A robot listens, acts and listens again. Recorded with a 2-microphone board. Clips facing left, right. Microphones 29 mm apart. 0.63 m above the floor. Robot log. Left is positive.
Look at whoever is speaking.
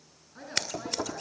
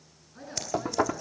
cmd yaw +30
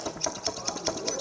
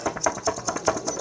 cmd idle
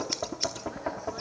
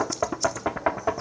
cmd idle
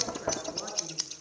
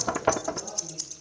note: So it is at 135° left.
cmd yaw +135
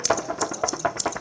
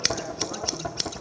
cmd idle
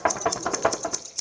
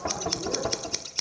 cmd idle
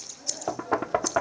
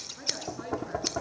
note: The woman speaking is now 40° right.
cmd yaw -40
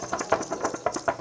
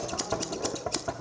cmd idle
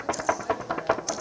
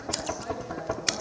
cmd idle
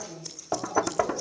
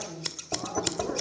end: Found it: a woman speaking, straight ahead.